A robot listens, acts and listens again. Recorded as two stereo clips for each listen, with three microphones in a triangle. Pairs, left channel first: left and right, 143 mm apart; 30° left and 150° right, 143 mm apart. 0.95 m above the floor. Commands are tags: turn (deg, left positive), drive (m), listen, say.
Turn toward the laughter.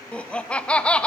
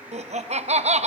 <turn deg="175"/>
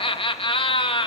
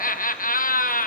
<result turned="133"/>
<turn deg="40"/>
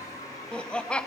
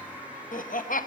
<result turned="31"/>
<turn deg="10"/>
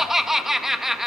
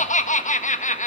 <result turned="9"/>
<say>Facing the laughter, under 1 m away.</say>